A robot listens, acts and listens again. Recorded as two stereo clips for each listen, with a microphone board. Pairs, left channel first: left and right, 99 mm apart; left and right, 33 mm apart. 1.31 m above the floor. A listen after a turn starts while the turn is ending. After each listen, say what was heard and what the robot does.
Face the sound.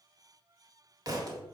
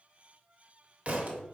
The thud: about 35° right or 145° right. Turn 35° right.
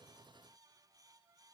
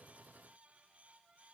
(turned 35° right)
Keep listening.
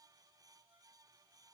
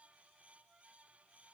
I heard a thud, but can't make it out now. It was about straight ahead or 110° right.